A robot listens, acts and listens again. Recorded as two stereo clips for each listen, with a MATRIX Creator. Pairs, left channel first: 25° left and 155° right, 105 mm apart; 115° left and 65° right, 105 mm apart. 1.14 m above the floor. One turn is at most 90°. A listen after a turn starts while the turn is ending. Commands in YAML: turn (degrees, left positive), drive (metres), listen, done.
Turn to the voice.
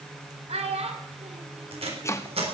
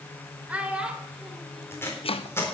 turn: -90
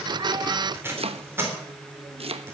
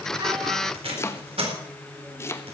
turn: -60
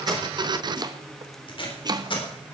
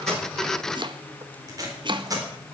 listen: true
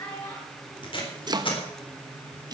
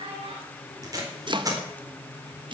turn: -30
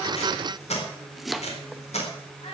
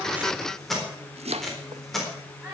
turn: 10
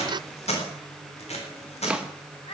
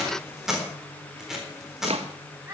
done: "Facing the child speaking, over 4 m away."